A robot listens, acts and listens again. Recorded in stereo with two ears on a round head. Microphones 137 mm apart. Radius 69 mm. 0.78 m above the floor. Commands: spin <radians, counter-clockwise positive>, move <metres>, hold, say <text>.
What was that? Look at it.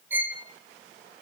spin -0.52
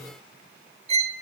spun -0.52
spin -2.44
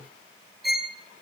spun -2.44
say Facing the violin.